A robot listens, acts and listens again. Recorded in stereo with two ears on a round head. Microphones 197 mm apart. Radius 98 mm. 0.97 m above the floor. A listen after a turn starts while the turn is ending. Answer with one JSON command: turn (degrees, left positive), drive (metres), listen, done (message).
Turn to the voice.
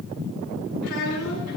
{"turn": 90}
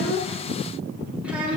{"done": "Facing the child speaking, over 4 m away."}